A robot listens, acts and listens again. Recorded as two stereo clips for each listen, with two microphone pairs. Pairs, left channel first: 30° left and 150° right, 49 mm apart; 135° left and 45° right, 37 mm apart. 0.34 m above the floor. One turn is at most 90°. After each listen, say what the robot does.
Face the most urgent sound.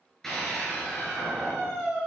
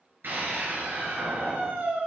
Turn 55° right.
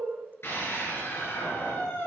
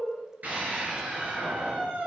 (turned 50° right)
Found it: a scream, straight ahead, over 4 m away.